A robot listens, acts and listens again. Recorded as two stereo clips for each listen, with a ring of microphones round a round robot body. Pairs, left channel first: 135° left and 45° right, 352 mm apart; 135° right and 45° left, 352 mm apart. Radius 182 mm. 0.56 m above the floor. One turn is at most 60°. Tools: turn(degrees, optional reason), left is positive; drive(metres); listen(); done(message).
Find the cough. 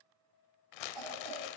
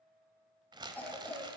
turn(degrees=-50, reason="The cough: 50° right.")
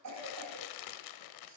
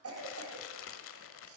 done("Found it: a cough, straight ahead.")